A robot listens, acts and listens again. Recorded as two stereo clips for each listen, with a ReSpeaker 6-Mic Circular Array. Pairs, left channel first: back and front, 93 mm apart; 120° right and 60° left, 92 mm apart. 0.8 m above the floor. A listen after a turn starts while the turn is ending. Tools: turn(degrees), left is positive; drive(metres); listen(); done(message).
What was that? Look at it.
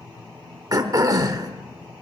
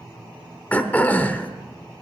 turn(degrees=-50)
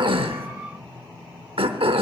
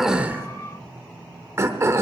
done("Facing the throat clearing.")